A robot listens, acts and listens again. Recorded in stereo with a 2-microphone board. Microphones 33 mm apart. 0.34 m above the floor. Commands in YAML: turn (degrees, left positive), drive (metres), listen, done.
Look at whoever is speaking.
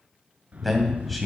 turn: 30
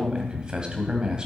turn: -30
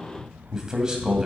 turn: -25
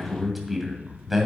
done: "Found it: a man speaking, straight ahead."